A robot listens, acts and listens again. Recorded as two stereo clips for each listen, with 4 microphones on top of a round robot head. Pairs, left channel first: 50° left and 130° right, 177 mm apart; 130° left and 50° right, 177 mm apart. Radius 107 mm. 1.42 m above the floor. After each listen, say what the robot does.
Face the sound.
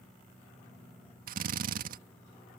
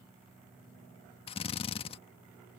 Turn 170° right.
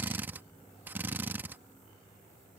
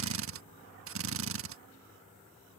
Turn 50° right.
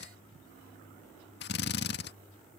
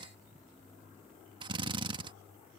Turn 15° left.
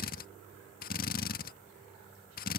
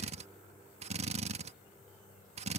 Facing the drill.